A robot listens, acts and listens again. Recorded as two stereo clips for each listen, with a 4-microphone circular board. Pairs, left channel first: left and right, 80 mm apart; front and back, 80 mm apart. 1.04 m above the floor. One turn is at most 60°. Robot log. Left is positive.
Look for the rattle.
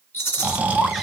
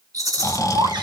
note: The rattle: 145° left.
cmd yaw +60
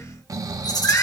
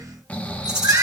note: The rattle is now 100° left.
cmd yaw +60
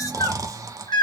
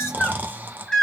note: Nothing new. It was at 40° left.
cmd yaw +40
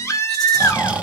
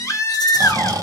cmd idle
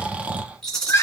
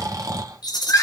end: Found it: a rattle, straight ahead.